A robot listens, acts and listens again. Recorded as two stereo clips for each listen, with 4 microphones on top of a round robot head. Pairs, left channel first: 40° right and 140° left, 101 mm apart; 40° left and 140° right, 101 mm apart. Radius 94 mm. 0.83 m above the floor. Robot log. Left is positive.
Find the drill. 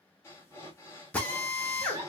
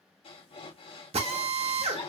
note: The drill: 115° right.
cmd yaw -115
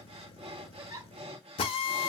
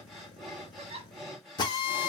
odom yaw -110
end: Found it: a drill, straight ahead.